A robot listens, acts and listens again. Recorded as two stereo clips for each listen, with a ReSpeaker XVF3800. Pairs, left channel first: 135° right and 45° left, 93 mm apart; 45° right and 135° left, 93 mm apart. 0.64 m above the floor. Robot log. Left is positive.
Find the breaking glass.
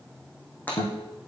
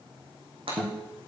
note: The breaking glass: 155° left.
cmd yaw +155
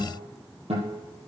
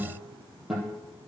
end: Facing where the breaking glass came from. I can't hear it now.